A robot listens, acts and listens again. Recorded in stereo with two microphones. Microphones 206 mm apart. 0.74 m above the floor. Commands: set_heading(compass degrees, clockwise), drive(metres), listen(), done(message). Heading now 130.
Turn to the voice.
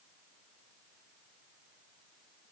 listen()
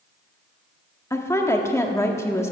set_heading(100)
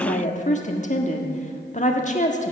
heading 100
set_heading(325)
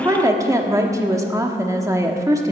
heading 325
set_heading(345)
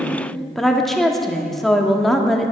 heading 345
done("Facing the woman speaking, 1 to 2 m away.")